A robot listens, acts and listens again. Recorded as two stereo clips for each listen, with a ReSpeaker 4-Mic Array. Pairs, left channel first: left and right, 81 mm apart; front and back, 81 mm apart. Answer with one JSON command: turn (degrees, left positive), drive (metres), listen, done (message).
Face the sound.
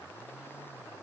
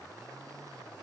{"listen": true}
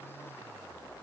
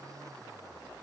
{"listen": true}
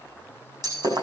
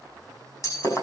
{"turn": -50}
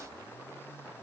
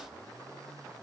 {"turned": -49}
{"done": "Facing where the breaking glass came from. I can't hear it now."}